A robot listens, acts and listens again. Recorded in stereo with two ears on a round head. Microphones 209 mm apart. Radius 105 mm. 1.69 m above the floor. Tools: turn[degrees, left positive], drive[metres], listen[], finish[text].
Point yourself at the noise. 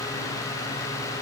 Action: listen[]
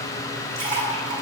Thought: The splash: about 25° right or 155° right.
Action: turn[-25]
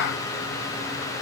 Action: listen[]
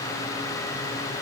Action: finish[I heard a splash, but can't make it out now. It was about straight ahead or 130° right.]